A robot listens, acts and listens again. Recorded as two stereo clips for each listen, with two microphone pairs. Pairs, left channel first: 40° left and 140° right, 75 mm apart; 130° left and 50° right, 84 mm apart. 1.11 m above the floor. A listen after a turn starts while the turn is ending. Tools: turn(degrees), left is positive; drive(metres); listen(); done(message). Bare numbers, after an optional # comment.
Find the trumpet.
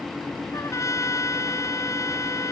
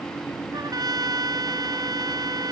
# The trumpet: 10° right.
turn(-10)
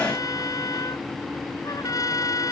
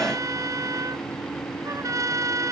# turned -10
done("Facing the trumpet.")